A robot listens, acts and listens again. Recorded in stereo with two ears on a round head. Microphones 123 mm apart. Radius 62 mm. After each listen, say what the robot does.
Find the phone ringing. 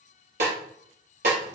Keep listening.
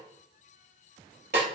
Keep listening.
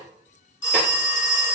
Turn 40° left.
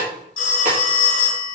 Turn 100° left.
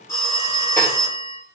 Turn 25° left.
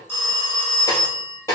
Turn 15° left.
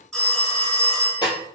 Facing the phone ringing, 1 to 2 m away.